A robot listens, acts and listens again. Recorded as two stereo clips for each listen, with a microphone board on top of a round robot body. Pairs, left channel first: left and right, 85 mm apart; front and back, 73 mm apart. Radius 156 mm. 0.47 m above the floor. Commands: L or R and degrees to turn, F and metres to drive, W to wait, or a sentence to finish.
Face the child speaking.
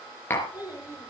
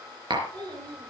R160
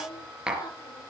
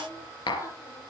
L40
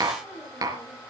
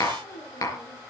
L10
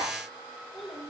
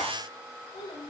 Facing the child speaking, over 4 m away.